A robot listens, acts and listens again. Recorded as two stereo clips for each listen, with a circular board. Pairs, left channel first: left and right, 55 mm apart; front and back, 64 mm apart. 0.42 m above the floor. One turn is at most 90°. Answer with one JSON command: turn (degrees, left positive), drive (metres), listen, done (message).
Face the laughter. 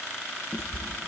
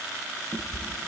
{"listen": true}
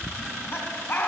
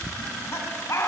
{"turn": 40}
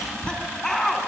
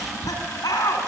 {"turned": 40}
{"turn": 10}
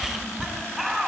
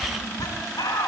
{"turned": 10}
{"done": "Found it: laughter, straight ahead."}